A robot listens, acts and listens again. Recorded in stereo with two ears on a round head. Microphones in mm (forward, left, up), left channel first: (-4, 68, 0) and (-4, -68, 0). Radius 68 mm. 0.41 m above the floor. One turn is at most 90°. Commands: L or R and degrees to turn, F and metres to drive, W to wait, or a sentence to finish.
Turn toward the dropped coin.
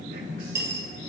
R20
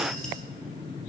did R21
W
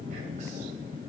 I heard a dropped coin, but can't make it out now. It was about 5° left or 140° right.